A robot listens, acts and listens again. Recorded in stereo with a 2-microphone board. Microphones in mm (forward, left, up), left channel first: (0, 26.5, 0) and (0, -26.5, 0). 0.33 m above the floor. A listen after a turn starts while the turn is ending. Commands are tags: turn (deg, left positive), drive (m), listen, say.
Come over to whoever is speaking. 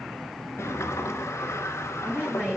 <turn deg="-30"/>
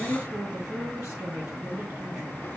<turn deg="-115"/>
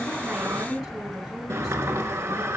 <drive m="1.0"/>
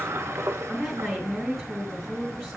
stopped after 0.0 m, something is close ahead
<say>Something is in my way. I am facing the woman speaking but have not reached it.</say>